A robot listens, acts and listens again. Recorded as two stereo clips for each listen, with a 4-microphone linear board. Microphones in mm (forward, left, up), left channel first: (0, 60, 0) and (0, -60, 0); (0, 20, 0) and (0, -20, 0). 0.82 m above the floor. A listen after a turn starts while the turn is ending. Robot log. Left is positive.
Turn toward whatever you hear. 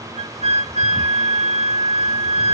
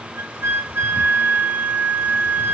cmd yaw -90
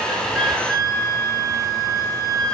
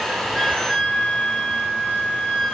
note: So it is at 10° left.
cmd yaw +10
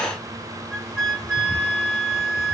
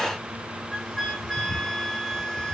end: Found it: a flute, straight ahead, 1 to 2 m away.